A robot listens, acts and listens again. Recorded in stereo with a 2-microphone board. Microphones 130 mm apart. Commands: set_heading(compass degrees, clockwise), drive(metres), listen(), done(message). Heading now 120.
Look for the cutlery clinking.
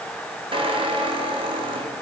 listen()
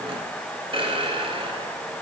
listen()
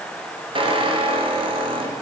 done("I can't make out cutlery clinking to turn to.")